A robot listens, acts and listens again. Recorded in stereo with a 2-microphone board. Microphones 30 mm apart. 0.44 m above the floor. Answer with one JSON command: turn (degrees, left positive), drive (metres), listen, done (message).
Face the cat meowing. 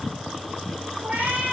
{"turn": -90}
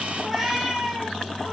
{"turn": -10}
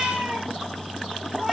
{"done": "Facing the cat meowing."}